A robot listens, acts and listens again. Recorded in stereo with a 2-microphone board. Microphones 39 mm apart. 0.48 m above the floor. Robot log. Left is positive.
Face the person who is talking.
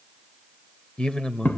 note: The man speaking: about 25° left or 155° left.
cmd yaw +25
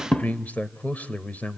note: So it is at 130° left.
cmd yaw +130
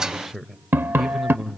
end: Facing the man speaking, 1 to 2 m away.